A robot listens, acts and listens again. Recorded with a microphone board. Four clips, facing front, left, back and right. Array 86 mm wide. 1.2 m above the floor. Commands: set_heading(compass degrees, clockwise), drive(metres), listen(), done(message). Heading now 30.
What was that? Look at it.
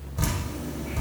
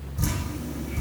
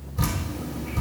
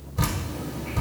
set_heading(105)
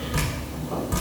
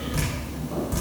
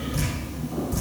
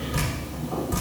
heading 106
done("Facing the dripping, over 4 m away.")